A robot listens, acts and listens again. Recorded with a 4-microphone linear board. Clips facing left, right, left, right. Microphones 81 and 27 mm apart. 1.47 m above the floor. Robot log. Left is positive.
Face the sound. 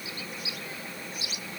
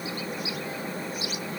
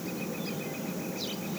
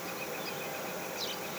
cmd idle
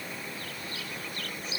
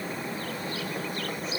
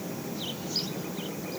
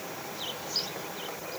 cmd idle
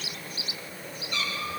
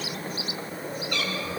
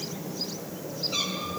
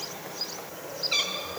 note: The cat meowing: about 70° right or 110° right.
cmd yaw -70
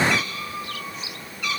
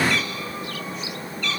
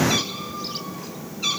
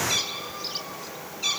note: So it is at 10° left.
cmd yaw +10
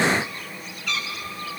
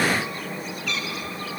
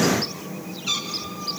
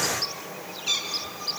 end: Found it: a cat meowing, straight ahead.